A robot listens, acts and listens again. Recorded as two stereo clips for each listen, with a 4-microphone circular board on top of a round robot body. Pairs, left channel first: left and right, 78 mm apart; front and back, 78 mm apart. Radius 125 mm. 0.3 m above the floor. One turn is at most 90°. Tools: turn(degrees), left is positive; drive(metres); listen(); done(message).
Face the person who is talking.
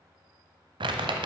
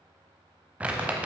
listen()
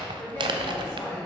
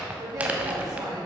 turn(degrees=90)
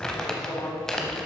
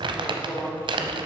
turn(degrees=60)
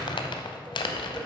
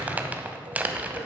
listen()
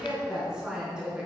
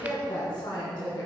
turn(degrees=-10)
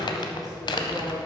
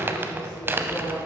done("Found it: a woman speaking, straight ahead.")